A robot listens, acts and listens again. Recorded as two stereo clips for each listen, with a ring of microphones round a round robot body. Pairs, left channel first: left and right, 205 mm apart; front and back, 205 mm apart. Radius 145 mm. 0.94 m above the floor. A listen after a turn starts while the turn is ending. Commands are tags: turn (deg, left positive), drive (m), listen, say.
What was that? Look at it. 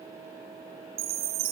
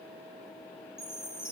<turn deg="-90"/>
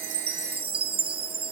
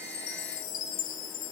<turn deg="-25"/>
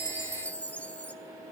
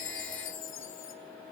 <say>Found it: a chime, straight ahead, under 1 m away.</say>